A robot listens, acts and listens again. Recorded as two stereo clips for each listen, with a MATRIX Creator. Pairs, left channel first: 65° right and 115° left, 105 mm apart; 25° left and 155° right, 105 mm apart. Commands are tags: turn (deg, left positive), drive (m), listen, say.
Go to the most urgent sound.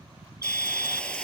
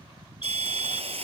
<turn deg="50"/>
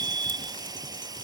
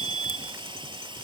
<drive m="1.0"/>
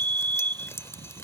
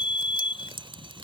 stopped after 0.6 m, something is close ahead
<say>Blocked. The fire alarm is further on, straight ahead.</say>